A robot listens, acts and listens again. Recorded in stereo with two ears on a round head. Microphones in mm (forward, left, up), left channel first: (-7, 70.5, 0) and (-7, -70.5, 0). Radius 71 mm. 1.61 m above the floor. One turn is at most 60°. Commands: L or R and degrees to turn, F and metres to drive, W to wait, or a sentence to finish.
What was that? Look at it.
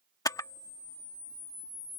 L25
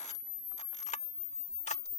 L60
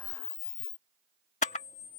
L50
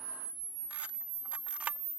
R10
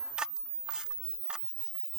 Found it: a camera shutter, straight ahead.